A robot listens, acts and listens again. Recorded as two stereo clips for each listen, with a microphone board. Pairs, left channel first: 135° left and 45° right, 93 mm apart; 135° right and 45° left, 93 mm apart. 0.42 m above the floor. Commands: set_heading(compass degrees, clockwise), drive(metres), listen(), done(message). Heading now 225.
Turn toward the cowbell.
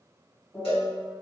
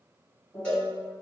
set_heading(80)
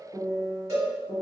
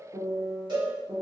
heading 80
set_heading(65)
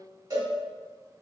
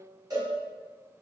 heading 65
done("Found it: a cowbell, straight ahead, 1 to 2 m away.")